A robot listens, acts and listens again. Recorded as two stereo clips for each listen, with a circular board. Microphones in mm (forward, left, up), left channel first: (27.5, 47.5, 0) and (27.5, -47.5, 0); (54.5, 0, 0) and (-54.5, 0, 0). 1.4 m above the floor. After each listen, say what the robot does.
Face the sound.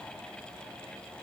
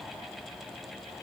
Keep listening.
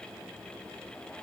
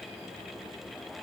Keep listening.
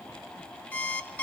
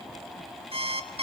Turn 160° left.
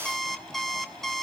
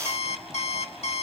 Facing the alarm clock.